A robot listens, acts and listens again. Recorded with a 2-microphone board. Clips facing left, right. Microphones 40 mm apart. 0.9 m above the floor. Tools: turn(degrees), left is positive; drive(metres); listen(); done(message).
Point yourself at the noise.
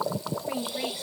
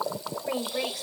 turn(degrees=-90)
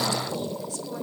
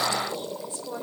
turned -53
turn(degrees=-35)
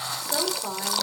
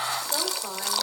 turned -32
done("Found it: a woman speaking, straight ahead, 2 to 4 m away.")